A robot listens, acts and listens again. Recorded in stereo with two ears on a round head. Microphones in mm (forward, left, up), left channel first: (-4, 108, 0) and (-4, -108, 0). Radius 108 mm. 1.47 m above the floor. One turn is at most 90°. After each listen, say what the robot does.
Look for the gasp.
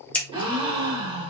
Turn 20° right.
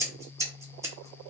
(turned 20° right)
Keep listening.
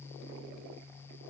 I heard a gasp, but can't make it out now. It was about straight ahead or 140° right.